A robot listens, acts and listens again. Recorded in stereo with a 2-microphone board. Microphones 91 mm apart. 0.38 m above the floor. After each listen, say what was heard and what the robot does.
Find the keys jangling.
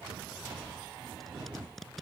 Keep listening.
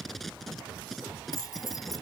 The keys jangling: about 40° left or 140° left. Turn 40° left.
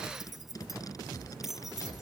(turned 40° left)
Facing the keys jangling.